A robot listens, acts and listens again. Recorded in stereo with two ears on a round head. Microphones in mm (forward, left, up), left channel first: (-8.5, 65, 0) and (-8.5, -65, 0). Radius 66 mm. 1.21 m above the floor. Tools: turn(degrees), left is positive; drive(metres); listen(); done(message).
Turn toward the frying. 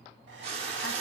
turn(degrees=-40)
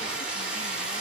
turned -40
turn(degrees=-10)
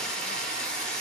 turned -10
done("Facing the frying, 1 to 2 m away.")